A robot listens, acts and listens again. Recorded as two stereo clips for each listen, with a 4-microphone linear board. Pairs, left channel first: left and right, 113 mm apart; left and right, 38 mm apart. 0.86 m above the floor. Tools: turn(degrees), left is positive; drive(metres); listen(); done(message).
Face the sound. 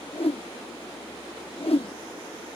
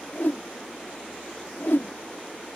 turn(degrees=65)
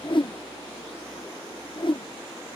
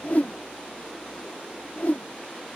turn(degrees=50)
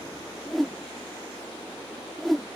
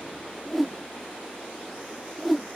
done("Facing the whoosh.")